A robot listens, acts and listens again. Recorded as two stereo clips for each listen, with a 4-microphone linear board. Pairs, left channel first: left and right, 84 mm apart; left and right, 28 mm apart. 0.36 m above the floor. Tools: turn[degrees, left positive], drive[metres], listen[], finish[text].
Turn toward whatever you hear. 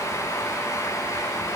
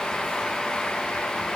Action: listen[]
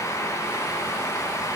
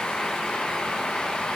Action: listen[]
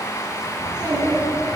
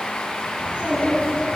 Thought: The child speaking: about 55° right or 125° right.
Action: turn[-55]
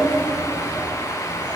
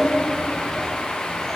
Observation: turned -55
Thought: So it is at 25° left.
Action: turn[25]
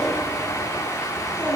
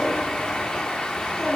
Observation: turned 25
Thought: The child speaking is now 15° left.
Action: turn[15]
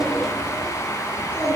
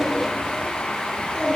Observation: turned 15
Thought: The child speaking is now 10° left.
Action: turn[10]
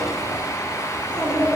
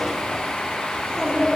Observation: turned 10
Action: finish[Found it: a child speaking, straight ahead.]